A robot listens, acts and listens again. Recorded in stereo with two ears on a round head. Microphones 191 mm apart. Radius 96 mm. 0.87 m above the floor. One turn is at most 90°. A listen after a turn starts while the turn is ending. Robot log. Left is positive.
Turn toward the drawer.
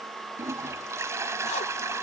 cmd idle
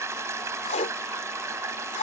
cmd idle
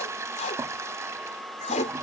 end: I can't make out a drawer to turn to.